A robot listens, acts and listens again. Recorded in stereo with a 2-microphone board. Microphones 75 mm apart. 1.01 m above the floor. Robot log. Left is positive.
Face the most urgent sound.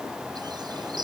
cmd idle
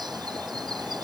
cmd idle
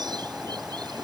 end: I can't make out anything urgent to turn to.